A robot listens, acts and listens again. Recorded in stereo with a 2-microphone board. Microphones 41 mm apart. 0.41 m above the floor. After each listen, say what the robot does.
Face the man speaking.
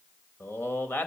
Turn 55° left.
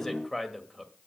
Facing the man speaking.